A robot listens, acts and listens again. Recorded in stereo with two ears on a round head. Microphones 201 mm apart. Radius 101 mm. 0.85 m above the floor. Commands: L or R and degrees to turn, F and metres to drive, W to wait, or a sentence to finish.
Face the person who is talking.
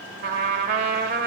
W
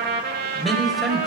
L30
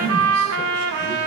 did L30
L150
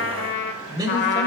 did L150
R20
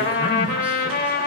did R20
W
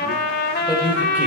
R10
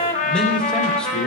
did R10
Found it: a man speaking, straight ahead, 2 to 4 m away.